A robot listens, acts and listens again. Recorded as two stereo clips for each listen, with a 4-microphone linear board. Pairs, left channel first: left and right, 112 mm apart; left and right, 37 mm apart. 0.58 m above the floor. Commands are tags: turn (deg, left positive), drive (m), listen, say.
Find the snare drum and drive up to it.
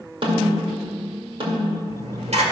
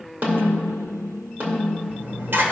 <turn deg="-55"/>
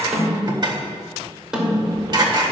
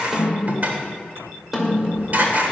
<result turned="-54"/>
<drive m="1.0"/>
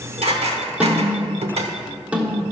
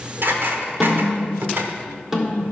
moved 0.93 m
<turn deg="-15"/>
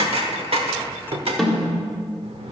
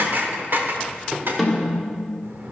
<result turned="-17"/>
<drive m="1.0"/>
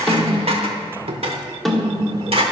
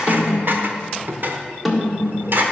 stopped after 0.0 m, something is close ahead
<say>Arrived at the snare drum, straight ahead.</say>